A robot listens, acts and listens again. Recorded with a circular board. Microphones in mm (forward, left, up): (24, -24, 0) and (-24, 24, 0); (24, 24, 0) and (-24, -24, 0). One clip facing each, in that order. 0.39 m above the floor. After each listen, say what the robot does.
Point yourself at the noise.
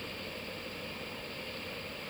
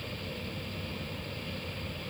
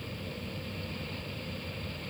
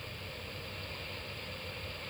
Keep listening.
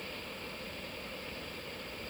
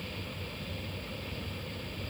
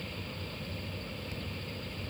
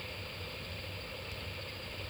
Keep listening.
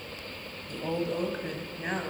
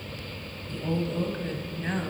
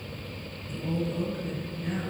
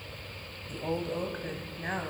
Turn 125° right.
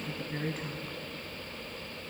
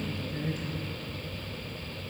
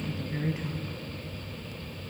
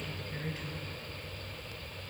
Turn 20° right.
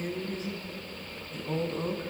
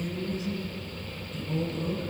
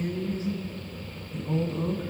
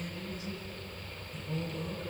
Facing the woman speaking.